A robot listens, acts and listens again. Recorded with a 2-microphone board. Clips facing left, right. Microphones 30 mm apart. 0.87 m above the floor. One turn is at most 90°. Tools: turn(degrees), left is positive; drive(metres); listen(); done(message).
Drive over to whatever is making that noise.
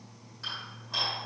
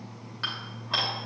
turn(degrees=-55)
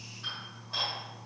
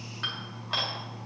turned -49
turn(degrees=-75)
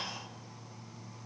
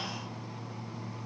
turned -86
turn(degrees=15)
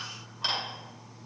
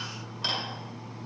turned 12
drive(metres=1.0)
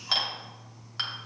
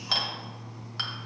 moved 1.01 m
drive(metres=1.0)
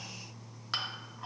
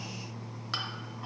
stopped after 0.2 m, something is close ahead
done("I am next to the dishes clattering.")